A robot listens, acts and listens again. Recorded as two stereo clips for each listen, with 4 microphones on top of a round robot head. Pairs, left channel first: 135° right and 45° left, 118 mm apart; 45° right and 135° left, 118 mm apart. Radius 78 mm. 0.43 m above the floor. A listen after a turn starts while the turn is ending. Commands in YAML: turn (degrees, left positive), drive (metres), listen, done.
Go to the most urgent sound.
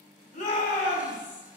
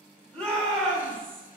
turn: -125
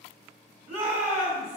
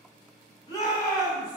turn: 15
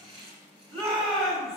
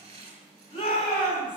drive: 1.0
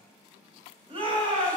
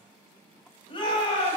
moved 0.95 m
drive: 1.0
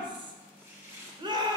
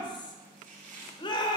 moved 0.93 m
drive: 1.0
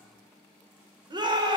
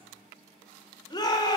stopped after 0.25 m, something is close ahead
done: "I am next to the shout."